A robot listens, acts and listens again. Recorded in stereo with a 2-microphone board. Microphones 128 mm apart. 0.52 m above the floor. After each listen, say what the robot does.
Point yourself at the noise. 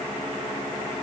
Keep listening.
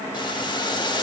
Turn 35° left.
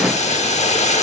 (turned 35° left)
Turn 105° left.
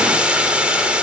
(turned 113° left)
Turn 10° right.
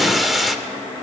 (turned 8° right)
Found it: boiling, straight ahead.